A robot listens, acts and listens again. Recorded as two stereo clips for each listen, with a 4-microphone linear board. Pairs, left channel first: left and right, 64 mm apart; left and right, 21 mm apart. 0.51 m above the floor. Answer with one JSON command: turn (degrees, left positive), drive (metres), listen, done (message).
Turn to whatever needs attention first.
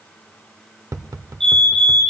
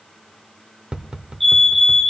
{"turn": 30}
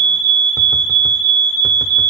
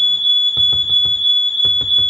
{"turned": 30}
{"turn": 140}
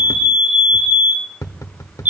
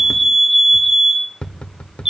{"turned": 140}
{"turn": -30}
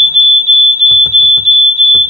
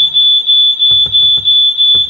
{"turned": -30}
{"turn": -10}
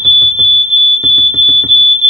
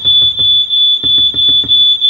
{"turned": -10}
{"done": "Facing the fire alarm."}